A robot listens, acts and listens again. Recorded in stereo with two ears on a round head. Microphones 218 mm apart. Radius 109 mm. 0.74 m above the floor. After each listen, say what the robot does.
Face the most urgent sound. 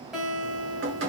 Keep listening.
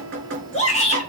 Turn 30° left.
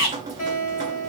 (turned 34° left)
Turn 115° left.
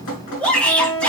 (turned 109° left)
Found it: a shout, straight ahead.